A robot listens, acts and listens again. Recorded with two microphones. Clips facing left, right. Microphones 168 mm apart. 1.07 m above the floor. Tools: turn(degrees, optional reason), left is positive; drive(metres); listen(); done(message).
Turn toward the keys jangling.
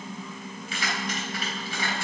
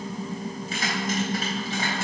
turn(degrees=-45, reason="The keys jangling: about 45° right or 135° right.")
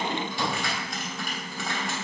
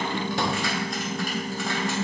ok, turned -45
listen()
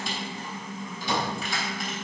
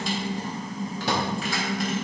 done("Found it: keys jangling, straight ahead, 2 to 4 m away.")